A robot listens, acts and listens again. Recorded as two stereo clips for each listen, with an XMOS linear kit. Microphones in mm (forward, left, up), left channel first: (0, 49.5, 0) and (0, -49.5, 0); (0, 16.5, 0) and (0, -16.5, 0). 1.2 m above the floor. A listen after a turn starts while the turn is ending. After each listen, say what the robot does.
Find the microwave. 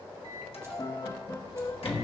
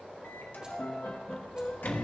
Turn 70° left.
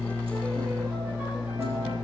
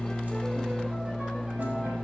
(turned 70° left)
Turn 40° left.
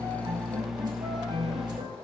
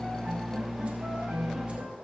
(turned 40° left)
Facing the microwave.